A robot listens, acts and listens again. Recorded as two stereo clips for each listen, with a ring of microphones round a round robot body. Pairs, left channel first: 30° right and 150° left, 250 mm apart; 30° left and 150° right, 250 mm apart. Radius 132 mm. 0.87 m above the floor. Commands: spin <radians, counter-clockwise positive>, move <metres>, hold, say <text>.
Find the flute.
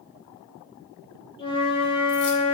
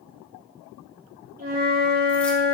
spin -1.75
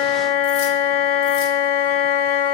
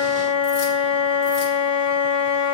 spin -0.70
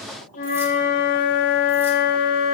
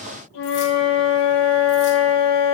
spin 0.44
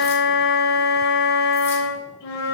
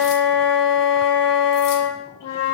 say Found it: a flute, straight ahead.